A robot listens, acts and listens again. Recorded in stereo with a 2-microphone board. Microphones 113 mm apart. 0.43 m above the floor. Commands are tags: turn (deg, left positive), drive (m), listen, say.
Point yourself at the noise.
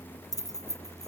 <turn deg="35"/>
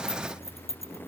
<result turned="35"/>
<turn deg="110"/>
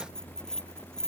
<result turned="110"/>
<say>Facing the keys jangling.</say>